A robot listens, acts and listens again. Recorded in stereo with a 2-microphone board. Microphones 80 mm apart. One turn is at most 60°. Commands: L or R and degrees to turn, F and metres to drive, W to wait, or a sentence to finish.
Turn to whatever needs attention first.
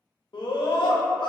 L60
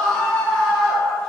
L10
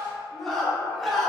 Facing the scream, under 1 m away.